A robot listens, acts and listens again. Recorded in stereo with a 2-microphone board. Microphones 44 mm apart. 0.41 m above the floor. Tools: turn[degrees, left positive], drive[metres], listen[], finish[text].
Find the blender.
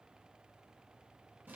Action: listen[]
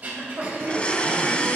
Thought: The blender: about 30° left or 150° left.
Action: turn[30]
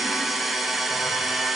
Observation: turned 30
Action: finish[Found it: a blender, straight ahead.]